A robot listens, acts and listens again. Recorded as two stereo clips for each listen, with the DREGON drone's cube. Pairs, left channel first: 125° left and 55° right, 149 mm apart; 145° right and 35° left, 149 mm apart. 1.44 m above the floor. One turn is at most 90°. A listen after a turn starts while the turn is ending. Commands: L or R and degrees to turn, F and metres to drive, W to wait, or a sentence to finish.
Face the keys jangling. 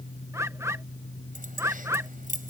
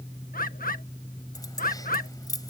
R80
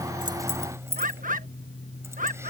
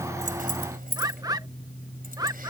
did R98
L15
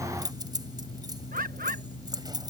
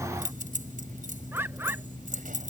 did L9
Found it: keys jangling, straight ahead.